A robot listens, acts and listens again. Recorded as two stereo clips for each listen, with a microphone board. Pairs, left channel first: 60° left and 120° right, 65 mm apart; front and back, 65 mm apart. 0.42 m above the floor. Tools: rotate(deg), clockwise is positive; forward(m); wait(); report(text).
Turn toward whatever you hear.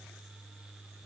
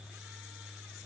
wait()
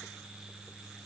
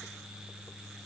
wait()
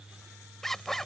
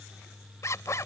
rotate(20)
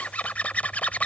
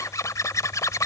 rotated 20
report("Facing the zipper.")